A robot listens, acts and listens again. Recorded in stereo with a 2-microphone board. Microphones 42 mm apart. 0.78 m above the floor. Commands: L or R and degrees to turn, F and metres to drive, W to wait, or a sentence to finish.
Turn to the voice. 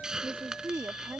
R60
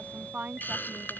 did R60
R45
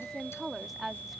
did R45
Facing the woman speaking.